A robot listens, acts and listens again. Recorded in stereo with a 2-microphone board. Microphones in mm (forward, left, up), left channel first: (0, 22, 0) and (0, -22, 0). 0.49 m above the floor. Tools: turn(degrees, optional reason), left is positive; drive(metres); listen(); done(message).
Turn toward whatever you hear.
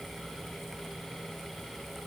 listen()
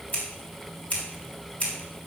turn(degrees=30, reason="The scissors: about 30° left or 150° left.")
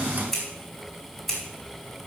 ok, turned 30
done("Facing the scissors, 2 to 4 m away.")